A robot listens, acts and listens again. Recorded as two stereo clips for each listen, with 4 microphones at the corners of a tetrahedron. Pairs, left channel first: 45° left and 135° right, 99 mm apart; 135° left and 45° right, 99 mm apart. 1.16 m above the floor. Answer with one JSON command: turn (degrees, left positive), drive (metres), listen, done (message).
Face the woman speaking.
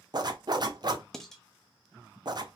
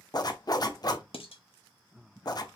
{"listen": true}
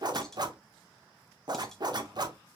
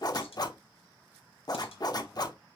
{"listen": true}
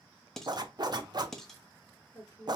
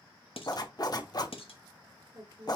{"turn": -10}
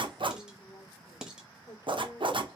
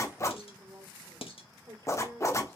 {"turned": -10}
{"done": "Facing the woman speaking."}